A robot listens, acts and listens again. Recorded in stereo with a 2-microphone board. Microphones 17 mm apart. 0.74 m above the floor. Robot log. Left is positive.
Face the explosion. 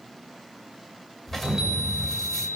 cmd yaw +30
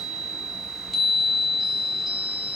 cmd idle
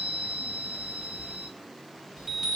end: I heard an explosion, but can't make it out now. It was about 25° right or 145° left.